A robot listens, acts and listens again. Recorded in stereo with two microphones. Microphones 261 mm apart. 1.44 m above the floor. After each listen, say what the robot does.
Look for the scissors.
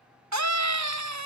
Keep listening.
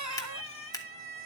Turn 30° left.
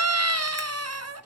Keep listening.
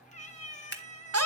Turn 135° left.
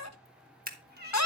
Turn 35° right.
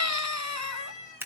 Turn 10° right.
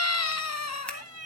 Keep listening.
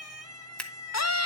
Facing the scissors.